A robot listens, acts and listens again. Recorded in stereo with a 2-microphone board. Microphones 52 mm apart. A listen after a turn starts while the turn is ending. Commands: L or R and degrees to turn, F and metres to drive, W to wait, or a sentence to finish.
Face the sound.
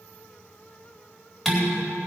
L30
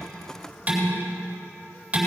R25
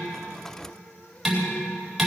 Found it: dishes clattering, straight ahead.